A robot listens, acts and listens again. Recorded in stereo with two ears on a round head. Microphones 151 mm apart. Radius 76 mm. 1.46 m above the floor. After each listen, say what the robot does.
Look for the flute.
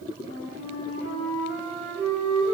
Turn 55° right.
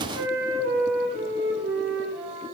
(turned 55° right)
Turn 70° right.
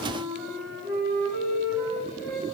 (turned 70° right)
Facing the flute, over 4 m away.